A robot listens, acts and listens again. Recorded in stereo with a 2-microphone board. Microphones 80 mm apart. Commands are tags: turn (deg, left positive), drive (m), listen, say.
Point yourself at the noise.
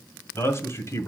<turn deg="40"/>
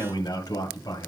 <turn deg="90"/>
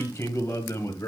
<turn deg="40"/>
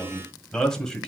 <say>Found it: a man speaking, straight ahead.</say>